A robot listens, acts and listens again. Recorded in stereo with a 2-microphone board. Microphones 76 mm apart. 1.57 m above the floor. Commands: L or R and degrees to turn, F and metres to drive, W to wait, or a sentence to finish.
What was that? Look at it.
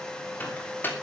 L25
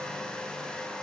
W
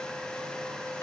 W
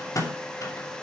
L130
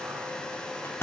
L35
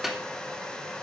Found it: a microwave, straight ahead, 2 to 4 m away.